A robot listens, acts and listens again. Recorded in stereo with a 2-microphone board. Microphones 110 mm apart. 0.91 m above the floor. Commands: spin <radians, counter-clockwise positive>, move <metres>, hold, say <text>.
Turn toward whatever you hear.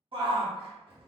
spin -0.96
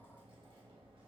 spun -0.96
hold
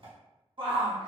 spin -1.05
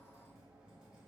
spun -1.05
hold
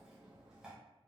hold
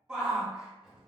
spin -0.17
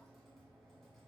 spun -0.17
hold
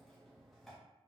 hold
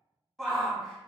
say Found it: a shout, straight ahead, 1 to 2 m away.